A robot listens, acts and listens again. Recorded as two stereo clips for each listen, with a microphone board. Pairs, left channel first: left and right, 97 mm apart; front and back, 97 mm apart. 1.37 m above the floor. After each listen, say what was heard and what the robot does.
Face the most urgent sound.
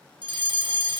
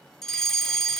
The fire alarm: 85° right. Turn 85° right.
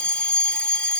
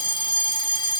The fire alarm is now 10° left. Turn 10° left.
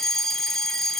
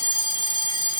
Facing the fire alarm.